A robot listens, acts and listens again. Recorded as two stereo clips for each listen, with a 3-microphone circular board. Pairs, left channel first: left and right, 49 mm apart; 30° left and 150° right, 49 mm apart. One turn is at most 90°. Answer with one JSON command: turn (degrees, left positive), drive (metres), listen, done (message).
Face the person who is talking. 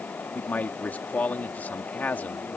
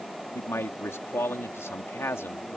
{"turn": 40}
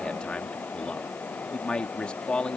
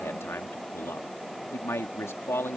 {"turn": 25}
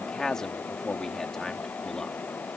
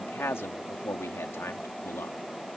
{"turn": 15}
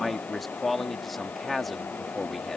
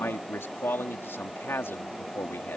{"done": "Facing the man speaking."}